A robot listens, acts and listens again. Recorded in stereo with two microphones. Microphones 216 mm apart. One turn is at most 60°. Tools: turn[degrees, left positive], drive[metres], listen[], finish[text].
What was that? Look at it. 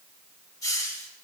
Action: turn[30]
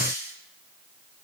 Thought: So it is at 15° right.
Action: turn[-15]
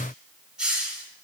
Action: finish[Found it: a hiss, straight ahead.]